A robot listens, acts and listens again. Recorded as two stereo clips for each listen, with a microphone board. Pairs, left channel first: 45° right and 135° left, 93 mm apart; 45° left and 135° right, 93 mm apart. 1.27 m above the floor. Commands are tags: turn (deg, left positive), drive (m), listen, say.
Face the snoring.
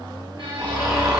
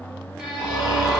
<turn deg="85"/>
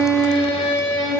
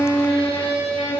<listen/>
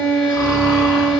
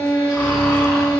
<listen/>
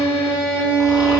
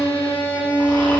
<say>Facing where the snoring came from. I can't hear it now.</say>